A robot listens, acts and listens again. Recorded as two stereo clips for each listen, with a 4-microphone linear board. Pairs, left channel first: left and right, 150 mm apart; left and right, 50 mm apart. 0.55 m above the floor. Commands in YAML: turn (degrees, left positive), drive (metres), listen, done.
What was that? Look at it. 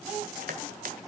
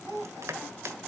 turn: -70
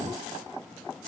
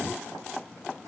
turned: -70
listen: true
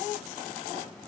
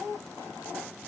listen: true
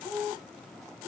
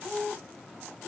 done: "I heard crushing, but can't make it out now. It was about straight ahead or 40° right."